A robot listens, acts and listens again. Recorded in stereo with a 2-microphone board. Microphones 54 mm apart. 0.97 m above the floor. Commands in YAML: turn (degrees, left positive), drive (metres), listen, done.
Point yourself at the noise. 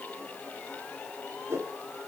turn: -75
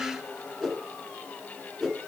done: "Facing the whoosh."